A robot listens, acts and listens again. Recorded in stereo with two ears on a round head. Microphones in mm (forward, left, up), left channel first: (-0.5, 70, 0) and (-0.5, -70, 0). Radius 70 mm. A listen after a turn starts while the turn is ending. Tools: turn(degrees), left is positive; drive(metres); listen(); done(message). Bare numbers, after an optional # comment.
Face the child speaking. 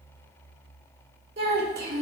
# The child speaking: about 70° right or 110° right.
turn(-70)
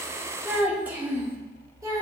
# So it is at 20° right.
turn(-20)
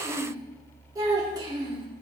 # The child speaking is now 30° right.
turn(-30)
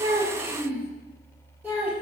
# The child speaking is now 10° right.
turn(-10)
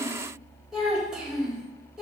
done("Found it: a child speaking, straight ahead, 1 to 2 m away.")